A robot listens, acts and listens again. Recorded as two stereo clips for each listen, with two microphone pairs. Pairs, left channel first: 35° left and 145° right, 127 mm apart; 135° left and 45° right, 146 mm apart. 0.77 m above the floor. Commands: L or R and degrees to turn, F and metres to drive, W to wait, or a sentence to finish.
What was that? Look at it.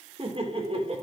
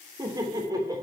R110
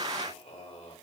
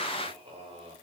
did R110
Found it: laughter, straight ahead.